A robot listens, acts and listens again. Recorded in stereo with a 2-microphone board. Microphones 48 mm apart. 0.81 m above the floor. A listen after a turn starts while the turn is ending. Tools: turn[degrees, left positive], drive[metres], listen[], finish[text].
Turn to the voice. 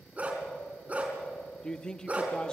Thought: The man speaking: about 15° left or 165° left.
Action: turn[15]
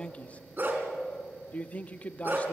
Thought: So it is at 150° left.
Action: turn[150]
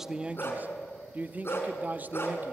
Thought: The man speaking is now 40° right.
Action: turn[-40]
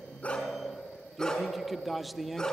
Action: finish[Facing the man speaking.]